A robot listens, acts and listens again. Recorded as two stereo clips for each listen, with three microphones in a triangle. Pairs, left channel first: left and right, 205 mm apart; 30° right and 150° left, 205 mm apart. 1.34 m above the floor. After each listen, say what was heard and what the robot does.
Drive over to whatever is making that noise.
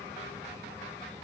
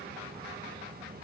Keep listening.
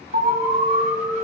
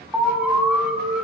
The alarm: 125° right. Turn 125° right.
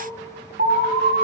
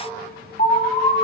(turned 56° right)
The alarm is now 70° right. Turn 70° right.
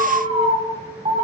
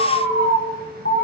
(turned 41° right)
The alarm is now 30° right. Turn 30° right.
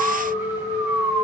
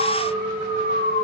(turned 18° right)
The alarm is now 10° right. Turn 10° right.
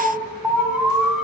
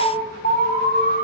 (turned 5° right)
Drive 1.0 m forward.
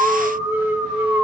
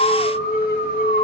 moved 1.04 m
The alarm is now 10° right. Turn 10° right.
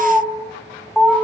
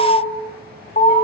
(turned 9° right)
Drive 1.0 m forward.
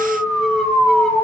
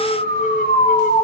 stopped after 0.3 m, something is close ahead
I am next to the alarm.